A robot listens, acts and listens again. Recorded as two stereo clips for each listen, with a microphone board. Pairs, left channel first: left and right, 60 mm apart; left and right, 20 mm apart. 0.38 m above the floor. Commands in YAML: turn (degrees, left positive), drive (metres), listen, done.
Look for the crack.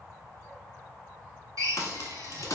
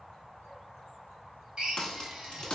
turn: 55
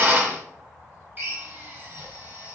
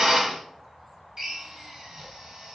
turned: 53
listen: true
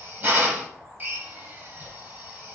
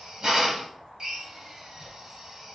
done: "I heard a crack, but can't make it out now. It was about 5° left or 70° left."